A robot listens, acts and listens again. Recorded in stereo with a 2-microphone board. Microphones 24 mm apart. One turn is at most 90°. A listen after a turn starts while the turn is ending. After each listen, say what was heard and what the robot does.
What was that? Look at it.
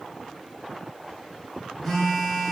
Turn 30° left.
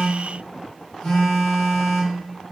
So it is at 135° left. Turn 90° left.
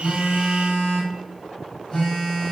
The phone buzzing is now 45° left. Turn 45° left.
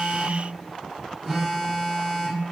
Facing the phone buzzing.